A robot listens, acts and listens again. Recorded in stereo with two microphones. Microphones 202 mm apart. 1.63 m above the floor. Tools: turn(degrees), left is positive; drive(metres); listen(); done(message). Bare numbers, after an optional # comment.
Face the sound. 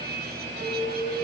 turn(30)
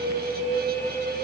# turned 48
# So it is at 40° right.
turn(-40)
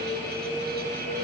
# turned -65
# The alarm is now 25° left.
turn(25)
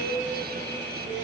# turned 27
done("Found it: an alarm, straight ahead, over 4 m away.")